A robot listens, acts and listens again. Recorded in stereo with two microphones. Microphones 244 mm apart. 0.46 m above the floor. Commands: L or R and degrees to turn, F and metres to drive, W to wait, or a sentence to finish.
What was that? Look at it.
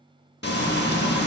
L45
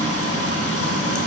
L85
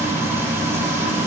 R10
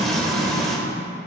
Found it: frying, straight ahead, under 1 m away.